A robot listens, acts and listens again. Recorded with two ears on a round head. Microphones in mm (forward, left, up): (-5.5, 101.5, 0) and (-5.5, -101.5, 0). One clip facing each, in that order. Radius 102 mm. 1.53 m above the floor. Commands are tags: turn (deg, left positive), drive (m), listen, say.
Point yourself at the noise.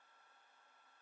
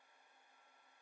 <listen/>
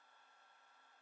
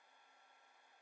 <listen/>
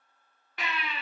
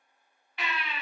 <turn deg="40"/>
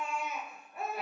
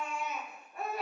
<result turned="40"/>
<say>Facing the baby crying, 1 to 2 m away.</say>